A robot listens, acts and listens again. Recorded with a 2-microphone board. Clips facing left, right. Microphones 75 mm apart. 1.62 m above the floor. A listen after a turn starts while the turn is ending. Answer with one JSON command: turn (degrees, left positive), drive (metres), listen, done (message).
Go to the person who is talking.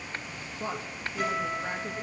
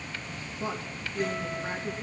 {"turn": 20}
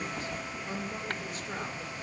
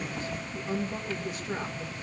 {"drive": 1.0}
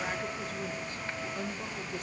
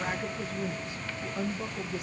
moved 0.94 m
{"drive": 1.0}
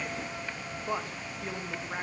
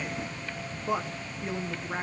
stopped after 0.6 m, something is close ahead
{"done": "I am next to the woman speaking."}